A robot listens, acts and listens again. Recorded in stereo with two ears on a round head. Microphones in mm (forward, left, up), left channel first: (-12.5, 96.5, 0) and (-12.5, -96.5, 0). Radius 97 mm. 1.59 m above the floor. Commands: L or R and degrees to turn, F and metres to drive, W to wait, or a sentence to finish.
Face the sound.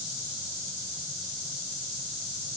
W
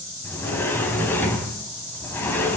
L30
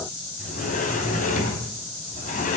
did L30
L135
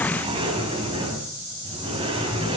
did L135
R30
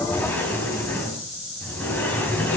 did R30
L10
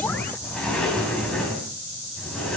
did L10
Facing the sliding door, 2 to 4 m away.